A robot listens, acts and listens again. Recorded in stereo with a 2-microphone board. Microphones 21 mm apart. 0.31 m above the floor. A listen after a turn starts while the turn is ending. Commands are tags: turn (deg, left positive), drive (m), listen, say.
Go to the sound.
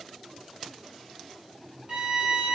<turn deg="-50"/>
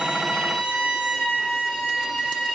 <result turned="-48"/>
<turn deg="-75"/>
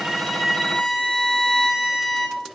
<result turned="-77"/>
<drive m="1.0"/>
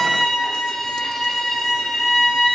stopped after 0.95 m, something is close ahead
<turn deg="10"/>
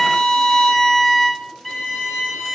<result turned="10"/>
<say>Arrived at the violin, straight ahead.</say>